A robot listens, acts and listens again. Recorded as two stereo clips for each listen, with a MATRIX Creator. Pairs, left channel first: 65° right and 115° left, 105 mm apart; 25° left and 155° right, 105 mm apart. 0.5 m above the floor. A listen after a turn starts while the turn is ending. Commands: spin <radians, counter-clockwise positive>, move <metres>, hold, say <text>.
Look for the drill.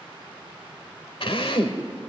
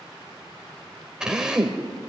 spin -1.31
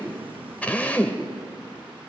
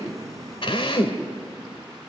say Found it: a drill, straight ahead.